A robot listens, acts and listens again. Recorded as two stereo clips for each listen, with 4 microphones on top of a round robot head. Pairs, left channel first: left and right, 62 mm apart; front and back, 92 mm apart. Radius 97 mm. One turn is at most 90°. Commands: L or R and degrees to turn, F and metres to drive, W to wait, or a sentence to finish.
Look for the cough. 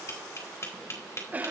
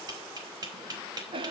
R90
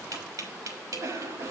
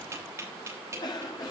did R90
R45
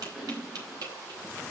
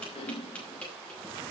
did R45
R10
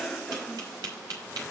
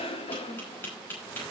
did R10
Found it: a cough, straight ahead.